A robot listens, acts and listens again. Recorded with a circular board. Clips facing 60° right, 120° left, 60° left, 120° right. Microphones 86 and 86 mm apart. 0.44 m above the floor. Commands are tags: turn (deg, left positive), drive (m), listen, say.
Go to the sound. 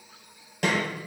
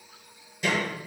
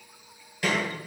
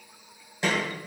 <turn deg="-55"/>
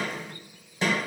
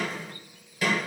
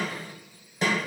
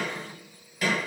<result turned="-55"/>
<drive m="1.0"/>
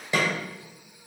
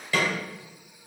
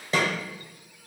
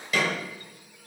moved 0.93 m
<drive m="1.0"/>
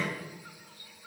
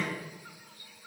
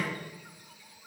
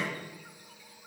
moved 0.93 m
<listen/>
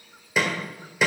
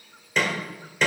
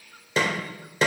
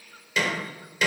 <turn deg="15"/>
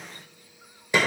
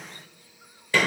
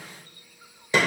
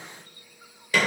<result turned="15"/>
<drive m="1.0"/>
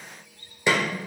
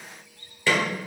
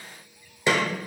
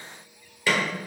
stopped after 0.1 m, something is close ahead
<say>I am next to the snare drum.</say>